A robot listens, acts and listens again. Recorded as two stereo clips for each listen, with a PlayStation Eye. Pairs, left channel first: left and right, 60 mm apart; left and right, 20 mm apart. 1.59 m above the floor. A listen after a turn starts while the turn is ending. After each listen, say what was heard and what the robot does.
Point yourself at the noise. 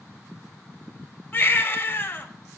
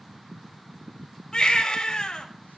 The baby crying: about 35° left or 145° left. Turn 35° left.
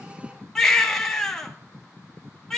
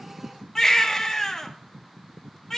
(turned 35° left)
So it is at 10° left. Turn 10° left.
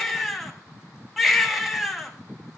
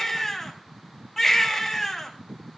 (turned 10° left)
Found it: a baby crying, straight ahead.